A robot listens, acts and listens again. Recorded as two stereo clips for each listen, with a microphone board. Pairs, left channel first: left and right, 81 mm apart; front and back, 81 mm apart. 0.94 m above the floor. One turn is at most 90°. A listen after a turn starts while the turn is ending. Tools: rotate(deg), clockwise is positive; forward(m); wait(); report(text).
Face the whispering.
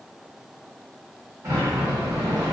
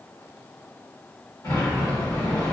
wait()
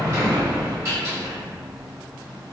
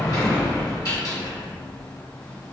wait()
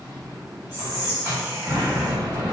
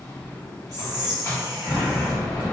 rotate(90)
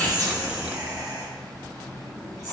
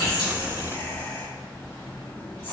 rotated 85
rotate(60)
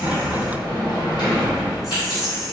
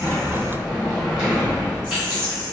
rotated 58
report("Facing the whispering.")